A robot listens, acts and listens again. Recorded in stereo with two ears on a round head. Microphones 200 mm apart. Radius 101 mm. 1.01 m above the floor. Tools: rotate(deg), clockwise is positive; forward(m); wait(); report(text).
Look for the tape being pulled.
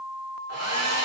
wait()
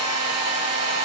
wait()
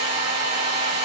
report("I can't make out tape being pulled to turn to.")